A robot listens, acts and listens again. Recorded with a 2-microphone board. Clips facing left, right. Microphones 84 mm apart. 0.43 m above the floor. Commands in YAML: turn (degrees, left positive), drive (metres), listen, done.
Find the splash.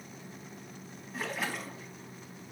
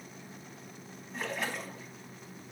turn: 30
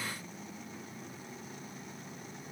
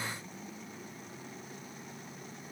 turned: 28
listen: true
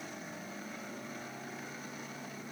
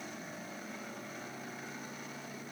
done: "I heard a splash, but can't make it out now. It was about 25° right or 150° left."